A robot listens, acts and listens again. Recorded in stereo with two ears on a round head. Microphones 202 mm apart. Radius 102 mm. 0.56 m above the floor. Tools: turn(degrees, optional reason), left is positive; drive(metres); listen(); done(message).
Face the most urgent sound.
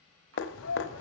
turn(degrees=65, reason="The shout: about 65° left or 115° left.")
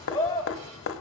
turn(degrees=15, reason="So it is at 15° left.")
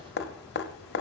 listen()
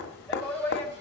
done("Found it: a shout, straight ahead.")